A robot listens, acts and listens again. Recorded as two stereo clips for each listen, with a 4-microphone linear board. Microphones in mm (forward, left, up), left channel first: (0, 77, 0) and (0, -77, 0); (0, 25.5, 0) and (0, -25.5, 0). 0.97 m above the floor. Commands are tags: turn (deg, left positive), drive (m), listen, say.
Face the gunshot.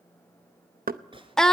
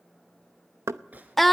<turn deg="-35"/>
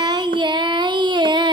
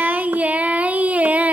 <listen/>
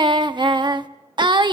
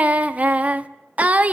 <say>I heard a gunshot, but can't make it out now. It was about straight ahead or 110° right.</say>